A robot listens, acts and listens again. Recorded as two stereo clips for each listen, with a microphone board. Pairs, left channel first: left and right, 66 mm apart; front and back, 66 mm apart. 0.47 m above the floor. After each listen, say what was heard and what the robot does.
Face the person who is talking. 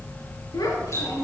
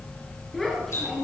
The child speaking: 90° left. Turn 90° left.
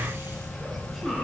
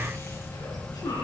Keep listening.
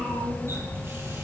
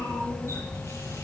Keep listening.
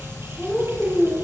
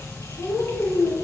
Facing the child speaking, over 4 m away.